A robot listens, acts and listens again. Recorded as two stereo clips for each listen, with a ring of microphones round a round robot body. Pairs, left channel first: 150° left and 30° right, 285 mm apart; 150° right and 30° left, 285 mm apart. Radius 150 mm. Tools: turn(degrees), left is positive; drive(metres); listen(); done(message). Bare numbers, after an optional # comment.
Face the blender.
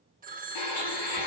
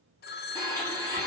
# The blender: 130° left.
turn(130)
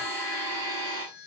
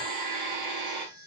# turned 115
# The blender is now 15° left.
turn(15)
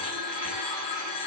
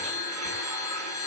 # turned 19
listen()
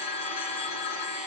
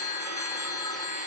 done("Found it: a blender, straight ahead.")